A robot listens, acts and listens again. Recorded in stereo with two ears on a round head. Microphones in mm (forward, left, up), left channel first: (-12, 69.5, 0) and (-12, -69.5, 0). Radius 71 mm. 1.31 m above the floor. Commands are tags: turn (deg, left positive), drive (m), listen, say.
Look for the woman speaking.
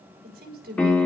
<turn deg="-70"/>
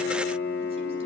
<listen/>
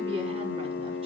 <listen/>
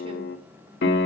<say>I heard a woman speaking, but can't make it out now. It was about straight ahead or 40° right.</say>